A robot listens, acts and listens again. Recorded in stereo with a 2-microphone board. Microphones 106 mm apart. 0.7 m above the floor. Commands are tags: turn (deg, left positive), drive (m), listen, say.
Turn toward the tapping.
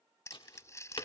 <turn deg="50"/>
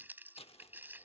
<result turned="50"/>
<listen/>
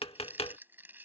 <turn deg="75"/>
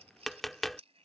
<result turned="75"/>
<say>Facing the tapping.</say>